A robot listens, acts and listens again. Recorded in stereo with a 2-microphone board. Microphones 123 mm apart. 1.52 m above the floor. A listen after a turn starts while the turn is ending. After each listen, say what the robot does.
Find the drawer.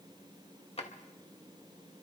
Turn 50° left.
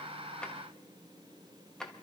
Facing the drawer.